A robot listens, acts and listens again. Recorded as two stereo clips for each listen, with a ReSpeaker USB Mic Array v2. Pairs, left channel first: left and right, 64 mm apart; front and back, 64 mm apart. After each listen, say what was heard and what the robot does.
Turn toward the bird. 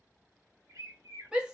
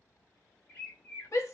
The bird: 60° right. Turn 60° right.
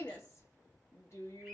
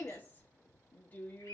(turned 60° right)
The bird is now 15° left. Turn 15° left.
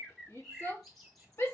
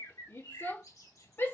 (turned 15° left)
Found it: a bird, straight ahead, 1 to 2 m away.